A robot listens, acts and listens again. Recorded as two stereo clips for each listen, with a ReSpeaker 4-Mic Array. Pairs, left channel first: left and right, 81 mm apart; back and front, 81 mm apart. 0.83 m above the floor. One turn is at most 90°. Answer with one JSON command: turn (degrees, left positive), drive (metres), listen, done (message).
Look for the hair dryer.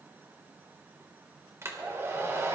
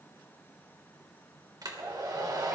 {"turn": -35}
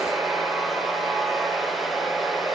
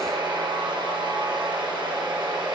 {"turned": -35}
{"done": "Facing the hair dryer, 2 to 4 m away."}